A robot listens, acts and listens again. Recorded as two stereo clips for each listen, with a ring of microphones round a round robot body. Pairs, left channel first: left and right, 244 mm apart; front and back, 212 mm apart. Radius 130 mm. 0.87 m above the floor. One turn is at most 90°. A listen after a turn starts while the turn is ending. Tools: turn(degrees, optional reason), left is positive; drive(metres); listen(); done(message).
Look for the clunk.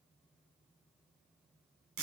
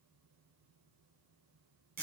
listen()
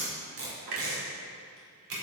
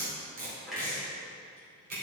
turn(degrees=-90, reason="The clunk: 90° right.")
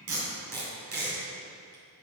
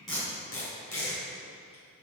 done("Facing where the clunk came from. I can't hear it now.")